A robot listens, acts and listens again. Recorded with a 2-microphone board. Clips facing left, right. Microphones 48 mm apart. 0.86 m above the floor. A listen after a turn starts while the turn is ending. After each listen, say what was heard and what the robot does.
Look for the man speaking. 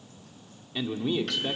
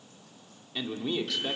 Turn 30° left.
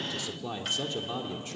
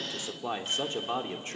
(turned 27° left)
So it is at 45° right. Turn 45° right.
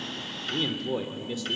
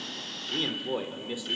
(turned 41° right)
The man speaking is now 15° right. Turn 15° right.
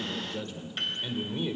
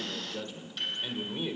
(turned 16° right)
The man speaking is now 10° right. Turn 10° right.
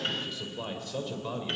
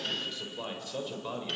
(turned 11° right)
Facing the man speaking.